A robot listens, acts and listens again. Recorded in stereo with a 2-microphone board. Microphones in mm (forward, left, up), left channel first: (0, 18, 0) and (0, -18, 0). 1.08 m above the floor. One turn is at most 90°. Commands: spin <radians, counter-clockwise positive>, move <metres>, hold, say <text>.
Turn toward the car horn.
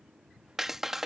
hold
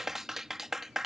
hold
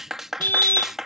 spin 1.57
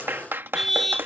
say Found it: a car horn, straight ahead.